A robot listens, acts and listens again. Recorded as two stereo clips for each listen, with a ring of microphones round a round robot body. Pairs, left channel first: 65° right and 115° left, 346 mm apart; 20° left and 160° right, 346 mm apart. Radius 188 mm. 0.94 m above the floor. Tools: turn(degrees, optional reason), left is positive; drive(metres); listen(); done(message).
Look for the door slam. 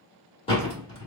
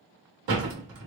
turn(degrees=-145, reason="The door slam: 145° right.")
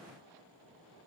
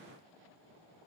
done("I heard a door slam from this way, but can't make it out now.")